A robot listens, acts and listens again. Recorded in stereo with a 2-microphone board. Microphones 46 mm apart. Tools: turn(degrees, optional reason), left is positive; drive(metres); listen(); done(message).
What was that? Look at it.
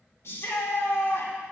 turn(degrees=60, reason="The shout: about 60° left or 120° left.")
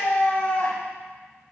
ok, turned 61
turn(degrees=55, reason="So it is at 55° left.")
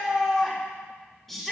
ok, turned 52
done("Found it: a shout, straight ahead.")